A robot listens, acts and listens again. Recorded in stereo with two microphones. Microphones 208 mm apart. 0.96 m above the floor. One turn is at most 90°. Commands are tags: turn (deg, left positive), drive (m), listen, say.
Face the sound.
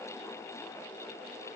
<listen/>
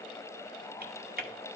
<turn deg="-45"/>
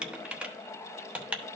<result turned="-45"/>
<say>Facing the typing on a keyboard.</say>